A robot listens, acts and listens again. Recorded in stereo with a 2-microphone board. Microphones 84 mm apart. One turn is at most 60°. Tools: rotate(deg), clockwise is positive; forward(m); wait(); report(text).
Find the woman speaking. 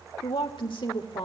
rotate(-60)
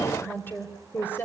rotate(-25)
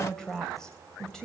rotate(-10)
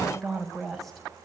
report("Facing the woman speaking, over 4 m away.")